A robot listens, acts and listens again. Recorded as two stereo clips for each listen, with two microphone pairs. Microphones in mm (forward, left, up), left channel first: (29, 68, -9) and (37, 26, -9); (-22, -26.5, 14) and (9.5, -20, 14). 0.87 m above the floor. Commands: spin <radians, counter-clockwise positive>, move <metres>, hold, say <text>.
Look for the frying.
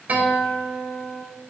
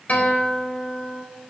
hold
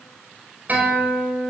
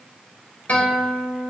hold
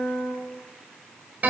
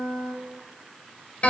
say I can't make out frying, only a guitar.